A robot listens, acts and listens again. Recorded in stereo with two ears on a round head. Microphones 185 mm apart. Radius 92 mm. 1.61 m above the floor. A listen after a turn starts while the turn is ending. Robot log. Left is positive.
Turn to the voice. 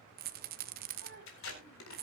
note: The child speaking: about 65° right or 115° right.
cmd yaw -65
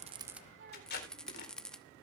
note: So it is at 55° right.
cmd yaw -55
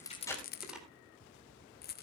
cmd idle
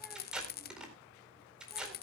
cmd idle
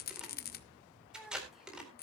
end: Found it: a child speaking, straight ahead.